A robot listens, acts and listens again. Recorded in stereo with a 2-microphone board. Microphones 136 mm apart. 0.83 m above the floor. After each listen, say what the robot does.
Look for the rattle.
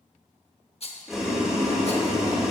Turn 45° left.
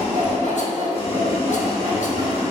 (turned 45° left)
Keep listening.
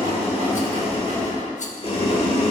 Keep listening.
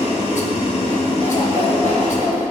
I heard a rattle, but can't make it out now. It was about straight ahead or 90° left.